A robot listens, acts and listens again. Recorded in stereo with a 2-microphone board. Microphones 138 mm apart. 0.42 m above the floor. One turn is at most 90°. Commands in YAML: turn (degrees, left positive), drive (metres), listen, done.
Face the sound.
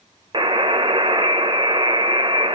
turn: -35
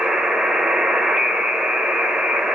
done: "Facing the buzzer, under 1 m away."